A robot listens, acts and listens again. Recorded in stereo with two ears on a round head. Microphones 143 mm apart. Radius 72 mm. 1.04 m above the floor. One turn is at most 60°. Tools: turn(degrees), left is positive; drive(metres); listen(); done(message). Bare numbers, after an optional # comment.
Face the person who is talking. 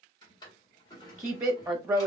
# The woman speaking: about 20° right or 160° right.
turn(-20)
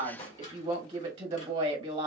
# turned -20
# So it is at 140° right.
turn(-60)
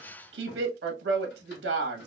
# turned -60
# The woman speaking is now 90° right.
turn(-60)
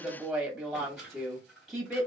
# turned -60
done("Facing the woman speaking.")